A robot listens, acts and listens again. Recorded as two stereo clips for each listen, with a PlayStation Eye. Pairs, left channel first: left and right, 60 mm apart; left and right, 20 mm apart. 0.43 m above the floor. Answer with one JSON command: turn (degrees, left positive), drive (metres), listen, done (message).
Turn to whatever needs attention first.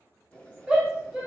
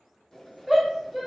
{"turn": -15}
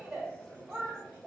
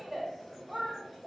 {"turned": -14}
{"turn": -150}
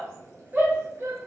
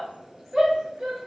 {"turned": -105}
{"turn": -40}
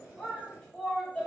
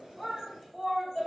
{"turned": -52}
{"turn": 10}
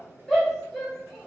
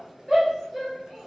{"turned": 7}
{"done": "Facing the shout."}